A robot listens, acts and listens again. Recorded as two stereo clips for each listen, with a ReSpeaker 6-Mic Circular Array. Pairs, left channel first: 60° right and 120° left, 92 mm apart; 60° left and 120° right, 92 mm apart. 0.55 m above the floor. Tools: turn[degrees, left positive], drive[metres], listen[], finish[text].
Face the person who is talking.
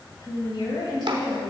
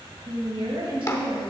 Thought: The woman speaking: 95° right.
Action: turn[-95]
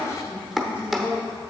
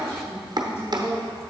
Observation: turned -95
Action: finish[Facing the woman speaking, 2 to 4 m away.]